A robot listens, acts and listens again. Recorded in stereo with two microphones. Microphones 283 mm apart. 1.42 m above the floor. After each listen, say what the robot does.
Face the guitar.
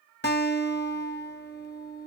Turn 40° left.
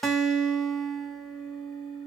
Facing the guitar, under 1 m away.